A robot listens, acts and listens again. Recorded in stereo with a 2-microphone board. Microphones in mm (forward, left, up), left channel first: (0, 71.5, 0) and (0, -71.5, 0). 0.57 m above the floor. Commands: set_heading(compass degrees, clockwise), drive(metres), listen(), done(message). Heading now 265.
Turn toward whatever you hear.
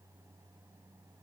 listen()
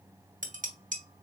set_heading(330)
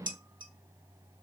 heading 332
set_heading(7)
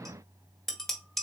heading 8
done("Facing the dishes clattering.")